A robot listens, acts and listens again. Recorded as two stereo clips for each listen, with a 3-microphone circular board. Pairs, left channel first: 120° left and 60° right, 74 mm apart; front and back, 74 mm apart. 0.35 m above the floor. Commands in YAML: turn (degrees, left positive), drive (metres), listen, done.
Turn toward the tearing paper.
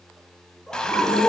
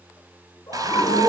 listen: true
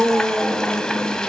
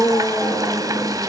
listen: true
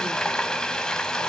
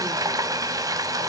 done: "I can't make out tearing paper, only a scream and frying."